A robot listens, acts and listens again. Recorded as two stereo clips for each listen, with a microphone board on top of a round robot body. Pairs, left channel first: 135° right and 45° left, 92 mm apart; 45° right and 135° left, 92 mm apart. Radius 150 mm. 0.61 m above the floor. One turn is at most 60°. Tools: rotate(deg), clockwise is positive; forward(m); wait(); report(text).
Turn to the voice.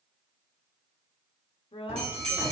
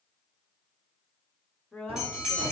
rotate(60)
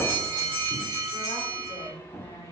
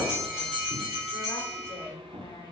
rotate(60)
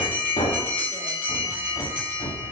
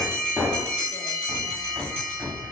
rotate(25)
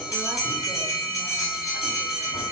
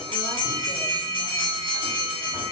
wait()
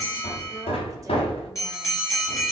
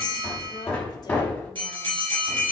report("I heard a woman speaking from this way, but can't make it out now.")